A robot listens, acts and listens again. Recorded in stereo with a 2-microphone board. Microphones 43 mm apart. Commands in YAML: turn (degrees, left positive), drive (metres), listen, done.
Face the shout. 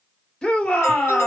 turn: 20
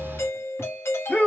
turn: 140
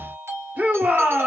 turn: -40
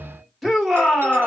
done: "Found it: a shout, straight ahead, 1 to 2 m away."